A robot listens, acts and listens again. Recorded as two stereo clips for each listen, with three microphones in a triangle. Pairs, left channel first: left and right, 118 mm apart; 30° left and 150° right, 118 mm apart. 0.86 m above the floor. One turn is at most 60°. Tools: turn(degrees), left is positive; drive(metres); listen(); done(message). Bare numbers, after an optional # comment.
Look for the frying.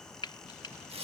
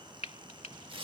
# The frying: 45° left.
turn(45)
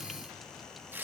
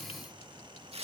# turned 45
listen()
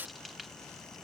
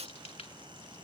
listen()
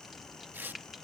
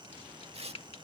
done("Found it: frying, straight ahead.")